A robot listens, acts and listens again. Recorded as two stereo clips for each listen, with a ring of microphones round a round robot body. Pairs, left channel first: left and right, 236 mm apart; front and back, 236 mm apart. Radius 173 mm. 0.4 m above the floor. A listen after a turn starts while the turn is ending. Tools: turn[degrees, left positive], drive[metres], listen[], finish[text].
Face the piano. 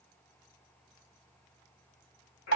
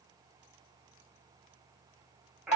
Action: listen[]
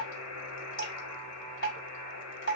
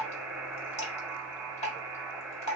Action: listen[]
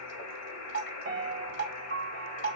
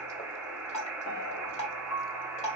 Thought: The piano: 40° right.
Action: turn[-40]
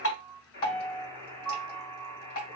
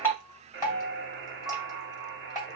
Thought: The piano is now 10° left.
Action: turn[10]
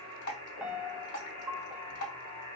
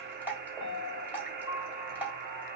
Action: finish[Found it: a piano, straight ahead.]